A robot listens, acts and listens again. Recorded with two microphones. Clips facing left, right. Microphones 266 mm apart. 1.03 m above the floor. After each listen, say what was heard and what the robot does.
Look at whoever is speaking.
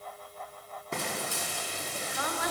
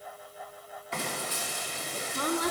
The woman speaking: about 40° right or 140° right. Turn 40° right.
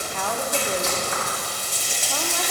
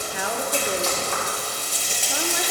So it is at 15° right. Turn 15° right.
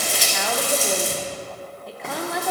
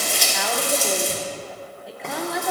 Found it: a woman speaking, straight ahead, under 1 m away.